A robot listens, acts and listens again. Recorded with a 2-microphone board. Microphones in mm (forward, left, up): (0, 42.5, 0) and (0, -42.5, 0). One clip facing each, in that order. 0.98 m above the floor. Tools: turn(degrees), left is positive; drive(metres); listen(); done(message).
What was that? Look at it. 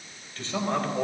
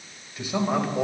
turn(degrees=-30)
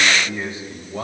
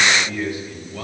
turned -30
turn(degrees=30)
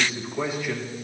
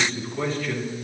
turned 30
turn(degrees=15)
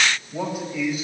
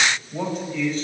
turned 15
turn(degrees=10)
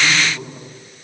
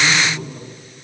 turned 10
done("Found it: a man speaking, straight ahead, over 4 m away.")